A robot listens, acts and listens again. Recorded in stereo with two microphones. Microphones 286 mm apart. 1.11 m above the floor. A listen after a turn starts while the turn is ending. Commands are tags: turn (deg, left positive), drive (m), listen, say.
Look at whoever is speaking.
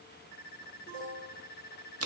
<listen/>
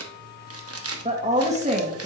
<turn deg="-25"/>
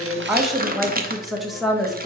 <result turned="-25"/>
<say>Found it: a woman speaking, straight ahead.</say>